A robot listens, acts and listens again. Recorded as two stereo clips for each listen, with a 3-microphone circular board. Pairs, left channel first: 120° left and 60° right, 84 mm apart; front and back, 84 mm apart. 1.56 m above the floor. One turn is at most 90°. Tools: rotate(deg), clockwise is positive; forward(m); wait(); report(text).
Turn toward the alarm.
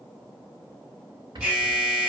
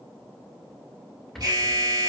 rotate(90)
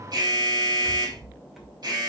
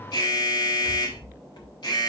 rotate(20)
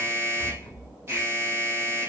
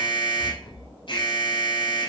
report("Facing the alarm, over 4 m away.")